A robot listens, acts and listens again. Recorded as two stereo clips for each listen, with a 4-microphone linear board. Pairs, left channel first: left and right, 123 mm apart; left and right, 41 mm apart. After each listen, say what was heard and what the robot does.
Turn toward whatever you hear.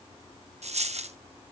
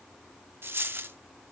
The dropped coin: about 75° right or 105° right. Turn 75° right.
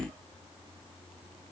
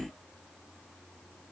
Keep listening.
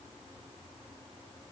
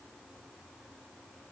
I heard a dropped coin, but can't make it out now. It was about straight ahead or 30° right.